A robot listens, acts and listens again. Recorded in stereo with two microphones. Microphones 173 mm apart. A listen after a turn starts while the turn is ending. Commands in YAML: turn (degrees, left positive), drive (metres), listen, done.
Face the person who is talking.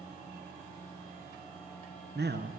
turn: -90
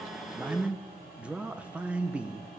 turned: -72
done: "Facing the man speaking, 1 to 2 m away."